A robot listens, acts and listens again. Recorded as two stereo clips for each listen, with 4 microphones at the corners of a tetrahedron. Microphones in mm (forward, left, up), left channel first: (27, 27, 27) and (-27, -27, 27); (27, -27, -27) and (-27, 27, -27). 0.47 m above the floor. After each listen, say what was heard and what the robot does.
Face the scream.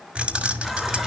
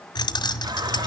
Keep listening.
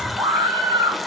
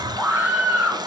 The scream: 155° right. Turn 155° right.
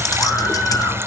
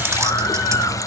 Keep listening.
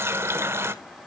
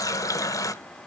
Keep listening.
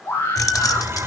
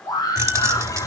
The scream is now 15° right. Turn 15° right.
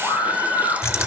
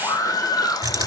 Found it: a scream, straight ahead, over 4 m away.